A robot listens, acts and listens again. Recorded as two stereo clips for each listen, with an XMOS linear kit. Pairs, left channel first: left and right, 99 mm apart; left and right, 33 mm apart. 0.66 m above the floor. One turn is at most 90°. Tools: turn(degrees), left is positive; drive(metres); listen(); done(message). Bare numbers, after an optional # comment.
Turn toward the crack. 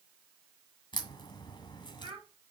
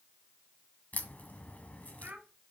# The crack: about 50° left or 130° left.
turn(50)
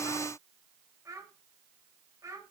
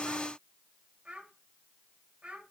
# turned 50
listen()
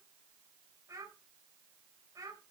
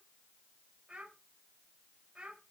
done("I heard a crack, but can't make it out now. It was about straight ahead or 80° left.")